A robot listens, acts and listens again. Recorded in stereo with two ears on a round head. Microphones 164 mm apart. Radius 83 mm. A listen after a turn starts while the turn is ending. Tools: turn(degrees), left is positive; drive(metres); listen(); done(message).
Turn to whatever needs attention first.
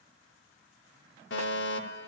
turn(degrees=70)
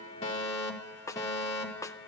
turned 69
turn(degrees=20)
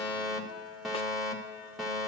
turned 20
done("Found it: a fire alarm, straight ahead.")